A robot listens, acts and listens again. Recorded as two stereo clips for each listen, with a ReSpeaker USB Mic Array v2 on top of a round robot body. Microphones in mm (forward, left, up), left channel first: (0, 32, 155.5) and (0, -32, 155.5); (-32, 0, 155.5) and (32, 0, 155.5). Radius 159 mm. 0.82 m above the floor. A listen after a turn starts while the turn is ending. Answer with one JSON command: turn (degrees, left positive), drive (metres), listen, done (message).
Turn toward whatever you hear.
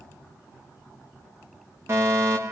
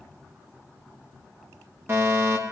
{"turn": -45}
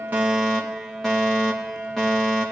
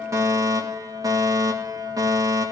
{"done": "Found it: a fire alarm, straight ahead, over 4 m away."}